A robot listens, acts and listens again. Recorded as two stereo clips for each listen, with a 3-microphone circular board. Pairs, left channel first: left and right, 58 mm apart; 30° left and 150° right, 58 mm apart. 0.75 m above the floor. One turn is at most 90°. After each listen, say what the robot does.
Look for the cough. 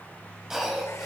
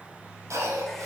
Turn 90° right.
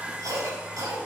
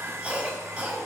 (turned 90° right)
Turn 85° right.
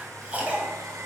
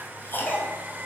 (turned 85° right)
Turn 20° right.
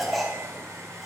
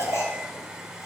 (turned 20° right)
Facing the cough, over 4 m away.